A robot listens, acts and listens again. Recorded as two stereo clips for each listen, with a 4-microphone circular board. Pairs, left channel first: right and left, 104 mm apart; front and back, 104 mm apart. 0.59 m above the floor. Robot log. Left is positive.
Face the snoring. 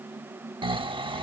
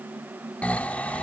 note: The snoring: 75° left.
cmd yaw +75
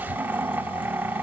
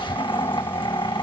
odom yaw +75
note: The snoring is now 20° left.
cmd yaw +20
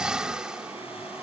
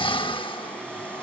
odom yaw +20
note: The snoring is now 10° left.
cmd yaw +10
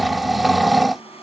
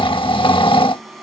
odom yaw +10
end: Found it: snoring, straight ahead.